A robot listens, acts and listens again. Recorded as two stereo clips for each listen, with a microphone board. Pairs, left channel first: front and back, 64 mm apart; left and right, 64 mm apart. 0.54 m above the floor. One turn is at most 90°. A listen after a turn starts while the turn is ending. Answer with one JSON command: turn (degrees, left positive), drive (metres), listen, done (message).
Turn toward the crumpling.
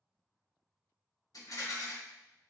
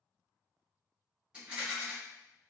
{"listen": true}
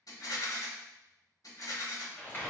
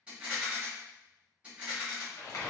{"turn": 60}
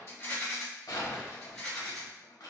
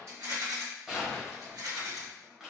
{"done": "Facing the crumpling, 1 to 2 m away."}